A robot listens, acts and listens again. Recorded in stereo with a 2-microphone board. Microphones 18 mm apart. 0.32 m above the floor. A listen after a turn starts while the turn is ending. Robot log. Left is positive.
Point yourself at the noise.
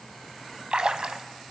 note: The splash: about 65° right or 115° right.
cmd yaw -65
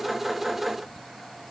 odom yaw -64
cmd idle
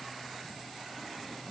end: I heard a splash, but can't make it out now. It was about straight ahead or 50° right.